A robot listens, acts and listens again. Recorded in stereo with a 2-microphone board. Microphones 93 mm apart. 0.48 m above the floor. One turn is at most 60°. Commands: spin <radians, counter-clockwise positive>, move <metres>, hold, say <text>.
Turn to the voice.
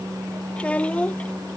spin 0.52
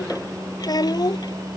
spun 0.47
spin 1.05
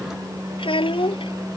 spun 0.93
spin 1.05
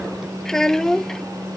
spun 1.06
say Facing the child speaking.